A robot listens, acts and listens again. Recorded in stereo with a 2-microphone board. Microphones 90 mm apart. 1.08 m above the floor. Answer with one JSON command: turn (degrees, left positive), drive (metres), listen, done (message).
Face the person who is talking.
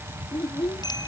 {"turn": 90}
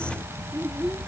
{"listen": true}
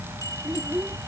{"turn": -10}
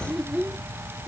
{"done": "Facing the child speaking."}